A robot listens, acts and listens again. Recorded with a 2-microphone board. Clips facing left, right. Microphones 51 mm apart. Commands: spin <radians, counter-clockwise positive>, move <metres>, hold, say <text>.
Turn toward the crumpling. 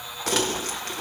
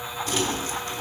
spin 1.22
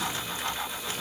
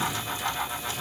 hold
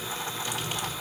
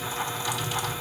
spin 0.79
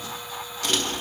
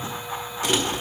spin -0.17
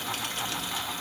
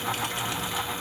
hold
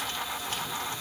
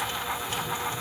hold
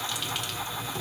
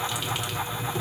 say Facing the crumpling, 1 to 2 m away.